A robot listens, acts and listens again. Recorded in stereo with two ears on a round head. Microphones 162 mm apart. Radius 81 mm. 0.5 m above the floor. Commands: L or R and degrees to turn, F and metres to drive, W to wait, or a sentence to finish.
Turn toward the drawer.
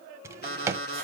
R15
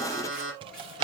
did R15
R150
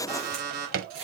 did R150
R55
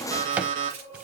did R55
W
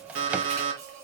W
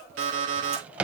Found it: a drawer, straight ahead.